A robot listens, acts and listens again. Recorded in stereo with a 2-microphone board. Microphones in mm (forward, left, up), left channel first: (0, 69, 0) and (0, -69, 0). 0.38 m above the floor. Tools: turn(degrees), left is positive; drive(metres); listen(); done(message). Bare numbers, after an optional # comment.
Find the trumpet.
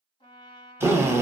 # The trumpet: about 40° left or 140° left.
turn(40)
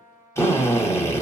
# So it is at 100° left.
turn(100)
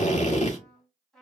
done("Facing the trumpet.")